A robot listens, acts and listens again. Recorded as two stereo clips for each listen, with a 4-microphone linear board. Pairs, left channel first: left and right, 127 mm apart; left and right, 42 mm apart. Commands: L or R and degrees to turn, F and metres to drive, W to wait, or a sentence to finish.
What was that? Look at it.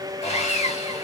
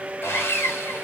L60
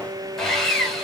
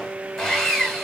Found it: sawing, straight ahead, 2 to 4 m away.